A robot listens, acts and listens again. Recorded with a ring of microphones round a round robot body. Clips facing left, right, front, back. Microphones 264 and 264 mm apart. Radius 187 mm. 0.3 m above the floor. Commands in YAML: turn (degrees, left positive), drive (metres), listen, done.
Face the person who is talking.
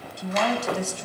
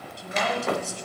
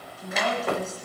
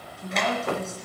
turn: 90
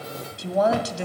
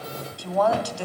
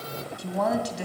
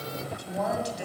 turn: 25
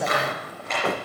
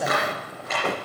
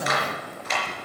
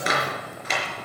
done: "Found it: a woman speaking, straight ahead, 1 to 2 m away."